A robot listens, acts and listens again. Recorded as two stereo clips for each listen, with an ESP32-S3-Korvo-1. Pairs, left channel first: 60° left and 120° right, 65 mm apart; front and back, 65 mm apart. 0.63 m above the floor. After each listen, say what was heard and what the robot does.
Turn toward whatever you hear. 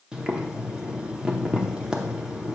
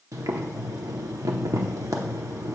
The boiling: 165° left. Turn 165° left.
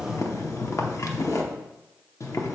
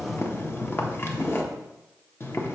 The boiling is now 40° left. Turn 40° left.
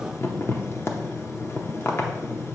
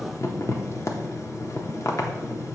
The boiling is now 20° left. Turn 20° left.
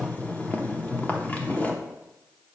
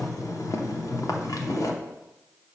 Found it: boiling, straight ahead.